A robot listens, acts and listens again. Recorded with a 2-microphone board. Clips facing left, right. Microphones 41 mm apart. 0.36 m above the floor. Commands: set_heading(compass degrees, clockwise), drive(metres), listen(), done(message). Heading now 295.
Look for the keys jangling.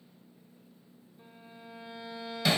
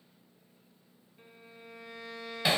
listen()
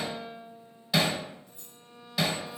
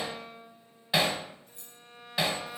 set_heading(350)
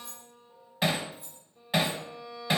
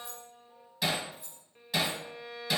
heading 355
done("Facing the keys jangling, over 4 m away.")